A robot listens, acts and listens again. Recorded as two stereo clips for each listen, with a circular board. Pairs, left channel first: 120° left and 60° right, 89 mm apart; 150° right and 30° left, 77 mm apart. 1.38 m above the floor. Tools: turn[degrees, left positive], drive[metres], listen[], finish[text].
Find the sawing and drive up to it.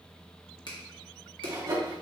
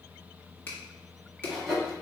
Thought: The sawing: 65° right.
Action: turn[-65]
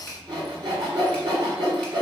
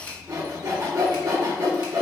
Thought: The sawing is now 25° right.
Action: turn[-25]
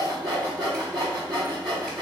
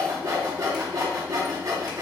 Thought: The sawing is now 20° right.
Action: turn[-20]
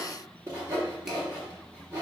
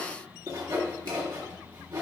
Action: drive[1.0]
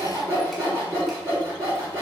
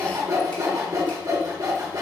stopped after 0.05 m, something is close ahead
Thought: The sawing is now 10° right.
Action: turn[-10]
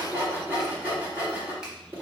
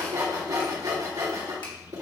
Action: finish[Something is in my way. I am facing the sawing but have not reached it.]